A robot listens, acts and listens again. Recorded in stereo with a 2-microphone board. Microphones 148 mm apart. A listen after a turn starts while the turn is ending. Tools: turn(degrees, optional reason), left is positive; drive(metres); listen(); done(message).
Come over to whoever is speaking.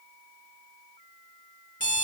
listen()
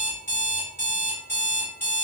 listen()
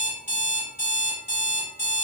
done("I can't make out anyone speaking, only an alarm clock.")